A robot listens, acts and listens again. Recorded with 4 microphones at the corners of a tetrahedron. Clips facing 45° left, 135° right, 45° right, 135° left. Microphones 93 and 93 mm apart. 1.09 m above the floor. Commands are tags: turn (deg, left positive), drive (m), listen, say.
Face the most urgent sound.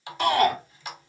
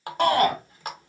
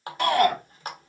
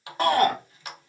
<turn deg="-170"/>
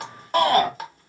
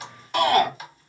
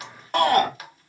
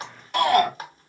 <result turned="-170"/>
<say>Facing the shout.</say>